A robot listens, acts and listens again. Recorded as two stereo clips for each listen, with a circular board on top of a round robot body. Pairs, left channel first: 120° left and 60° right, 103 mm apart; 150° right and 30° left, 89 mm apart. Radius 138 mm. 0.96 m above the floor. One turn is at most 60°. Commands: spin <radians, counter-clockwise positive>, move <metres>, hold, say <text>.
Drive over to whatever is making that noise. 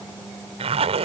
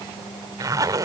spin -0.44
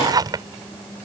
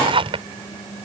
move 1.0
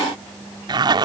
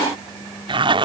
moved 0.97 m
move 1.0
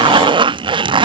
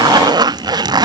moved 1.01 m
spin -0.26
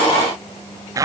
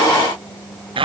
move 1.0
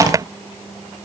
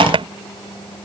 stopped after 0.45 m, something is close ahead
say I am next to the zipper.